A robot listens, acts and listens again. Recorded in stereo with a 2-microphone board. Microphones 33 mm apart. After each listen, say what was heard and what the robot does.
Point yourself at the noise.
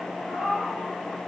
The cat meowing: about 25° right or 155° right. Turn 25° right.
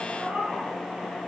So it is at 130° right. Turn 130° right.
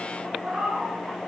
The cat meowing is now 35° right. Turn 35° right.
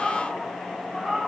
The cat meowing is now 15° right. Turn 15° right.
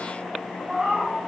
The cat meowing is now 15° right. Turn 15° right.
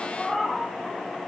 Found it: a cat meowing, straight ahead.